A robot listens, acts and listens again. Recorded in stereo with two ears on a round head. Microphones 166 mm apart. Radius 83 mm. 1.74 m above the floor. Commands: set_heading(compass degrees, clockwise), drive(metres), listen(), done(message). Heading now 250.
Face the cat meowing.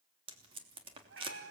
set_heading(315)
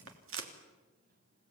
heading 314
listen()
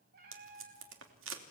set_heading(9)
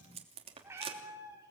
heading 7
set_heading(22)
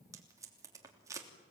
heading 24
listen()
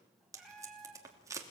done("Facing the cat meowing, over 4 m away.")